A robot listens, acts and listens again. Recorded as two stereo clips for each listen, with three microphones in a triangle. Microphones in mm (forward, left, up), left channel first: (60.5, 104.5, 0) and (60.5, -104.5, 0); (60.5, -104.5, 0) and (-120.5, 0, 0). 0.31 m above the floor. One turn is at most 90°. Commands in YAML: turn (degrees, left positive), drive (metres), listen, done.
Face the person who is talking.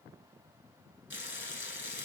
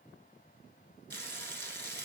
listen: true
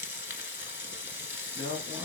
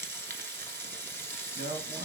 turn: 90
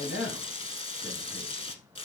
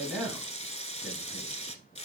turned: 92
turn: 65
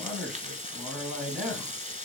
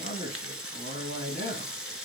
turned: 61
done: "Facing the man speaking, 2 to 4 m away."